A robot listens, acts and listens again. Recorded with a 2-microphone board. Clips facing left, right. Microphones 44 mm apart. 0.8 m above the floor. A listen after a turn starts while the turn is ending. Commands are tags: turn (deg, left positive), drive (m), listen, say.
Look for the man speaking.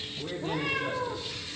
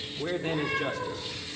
<turn deg="-70"/>
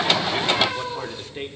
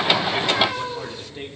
<turn deg="30"/>
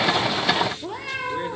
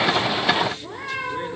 <listen/>
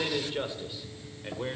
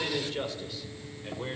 <turn deg="20"/>
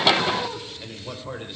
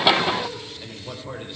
<turn deg="10"/>
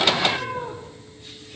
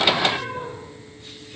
<listen/>
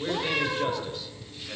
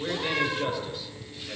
<say>Found it: a man speaking, straight ahead, 2 to 4 m away.</say>